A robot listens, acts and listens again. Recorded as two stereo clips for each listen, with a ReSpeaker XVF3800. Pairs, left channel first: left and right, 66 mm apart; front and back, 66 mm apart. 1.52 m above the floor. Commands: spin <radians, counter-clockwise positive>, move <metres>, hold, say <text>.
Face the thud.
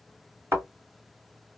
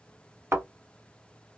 spin -2.27
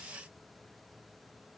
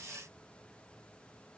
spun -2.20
say Facing where the thud came from. I can't hear it now.